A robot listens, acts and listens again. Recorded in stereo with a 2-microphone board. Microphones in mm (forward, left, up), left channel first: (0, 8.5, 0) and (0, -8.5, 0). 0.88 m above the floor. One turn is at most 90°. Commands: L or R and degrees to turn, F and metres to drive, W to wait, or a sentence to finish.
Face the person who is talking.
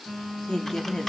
L45
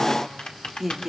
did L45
Found it: a woman speaking, straight ahead, 2 to 4 m away.